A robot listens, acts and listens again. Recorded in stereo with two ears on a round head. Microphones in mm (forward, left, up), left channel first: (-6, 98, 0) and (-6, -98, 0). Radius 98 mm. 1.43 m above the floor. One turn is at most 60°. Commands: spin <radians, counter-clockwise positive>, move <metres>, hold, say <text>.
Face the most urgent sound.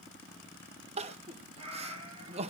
spin -0.52
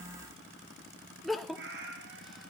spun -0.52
say Facing the crying, 1 to 2 m away.